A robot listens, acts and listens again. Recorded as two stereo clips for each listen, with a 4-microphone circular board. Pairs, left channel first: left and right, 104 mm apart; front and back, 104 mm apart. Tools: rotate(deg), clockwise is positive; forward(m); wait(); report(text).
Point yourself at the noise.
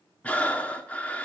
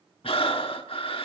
rotate(-15)
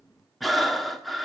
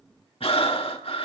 report("Found it: breathing, straight ahead.")